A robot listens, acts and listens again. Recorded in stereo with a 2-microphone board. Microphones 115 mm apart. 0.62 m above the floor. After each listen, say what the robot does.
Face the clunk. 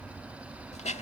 Keep listening.
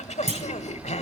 Turn 90° right.
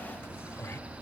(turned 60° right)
Turn 30° right.
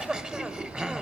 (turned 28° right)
Facing where the clunk came from. I can't hear it now.